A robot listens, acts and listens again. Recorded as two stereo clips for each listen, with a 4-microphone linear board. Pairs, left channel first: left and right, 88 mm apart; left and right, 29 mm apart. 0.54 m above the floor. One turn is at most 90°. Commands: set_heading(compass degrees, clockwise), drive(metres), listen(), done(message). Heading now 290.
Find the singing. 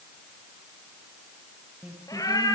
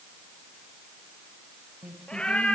set_heading(305)
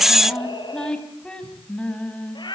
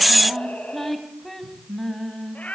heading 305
set_heading(290)
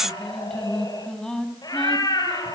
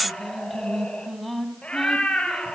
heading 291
done("Facing the singing.")